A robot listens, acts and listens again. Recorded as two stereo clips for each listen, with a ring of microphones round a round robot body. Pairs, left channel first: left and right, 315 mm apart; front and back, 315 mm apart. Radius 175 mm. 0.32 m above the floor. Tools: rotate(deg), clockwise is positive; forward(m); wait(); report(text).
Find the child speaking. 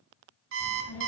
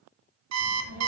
rotate(-135)
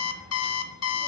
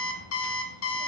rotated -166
rotate(15)
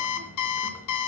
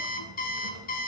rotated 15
rotate(-10)
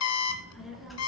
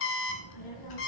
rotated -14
report("Found it: a child speaking, straight ahead.")